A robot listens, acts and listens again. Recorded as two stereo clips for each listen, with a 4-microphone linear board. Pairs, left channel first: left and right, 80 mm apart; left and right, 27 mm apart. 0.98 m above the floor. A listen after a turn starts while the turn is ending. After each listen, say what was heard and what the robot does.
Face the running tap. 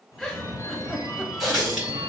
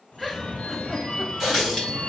Turn 30° left.
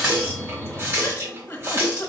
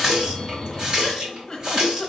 So it is at 30° right. Turn 30° right.
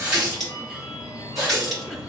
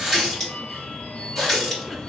Facing the running tap.